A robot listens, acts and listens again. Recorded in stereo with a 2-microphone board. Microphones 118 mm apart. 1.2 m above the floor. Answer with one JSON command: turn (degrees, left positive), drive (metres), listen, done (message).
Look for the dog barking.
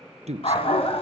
{"turn": 55}
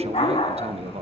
{"turn": 55}
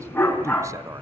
{"turn": 15}
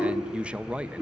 {"turn": -10}
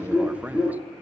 {"turn": -10}
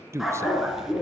{"done": "Found it: a dog barking, straight ahead, 2 to 4 m away."}